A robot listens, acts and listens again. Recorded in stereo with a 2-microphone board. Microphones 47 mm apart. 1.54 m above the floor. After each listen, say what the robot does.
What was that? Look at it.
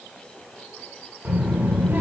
Turn 45° right.
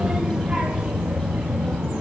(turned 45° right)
Turn 35° right.
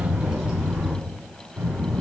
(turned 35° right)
Turn 25° right.
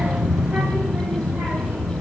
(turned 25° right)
Turn 10° right.
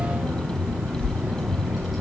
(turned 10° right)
Found it: a child speaking, straight ahead, 2 to 4 m away.